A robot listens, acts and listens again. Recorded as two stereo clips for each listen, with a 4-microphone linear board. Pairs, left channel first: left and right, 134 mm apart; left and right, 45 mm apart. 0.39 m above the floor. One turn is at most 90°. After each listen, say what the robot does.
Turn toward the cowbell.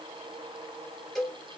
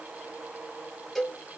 Turn 30° left.
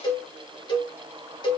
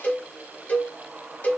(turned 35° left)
Turn 90° left.
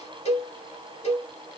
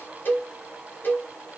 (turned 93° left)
Turn 50° left.
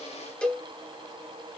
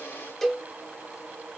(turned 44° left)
Facing the cowbell, under 1 m away.